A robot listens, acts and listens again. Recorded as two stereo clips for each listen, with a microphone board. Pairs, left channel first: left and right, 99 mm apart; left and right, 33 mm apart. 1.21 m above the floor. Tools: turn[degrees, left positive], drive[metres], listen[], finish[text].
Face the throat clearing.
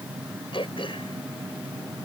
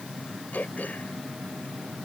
Thought: The throat clearing: about 60° left or 120° left.
Action: turn[60]
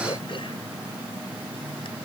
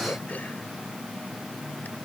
Action: listen[]
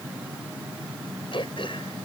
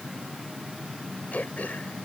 Thought: So it is at 60° left.
Action: turn[60]
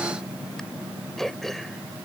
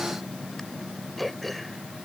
Action: finish[Facing the throat clearing.]